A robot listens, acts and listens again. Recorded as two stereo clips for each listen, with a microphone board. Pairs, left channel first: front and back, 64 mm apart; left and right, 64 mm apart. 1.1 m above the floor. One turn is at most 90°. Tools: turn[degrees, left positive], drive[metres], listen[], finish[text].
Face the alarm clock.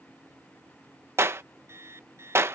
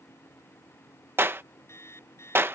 Thought: The alarm clock: 135° left.
Action: turn[90]
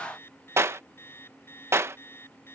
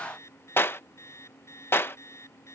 Thought: The alarm clock is now 50° left.
Action: turn[50]
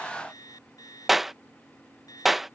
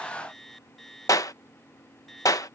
Action: finish[Facing the alarm clock.]